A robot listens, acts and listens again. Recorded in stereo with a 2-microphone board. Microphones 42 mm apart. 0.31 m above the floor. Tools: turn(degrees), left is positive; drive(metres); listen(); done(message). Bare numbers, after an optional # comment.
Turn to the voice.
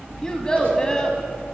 # The child speaking: about 15° left or 165° left.
turn(15)
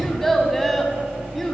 done("Facing the child speaking, 1 to 2 m away.")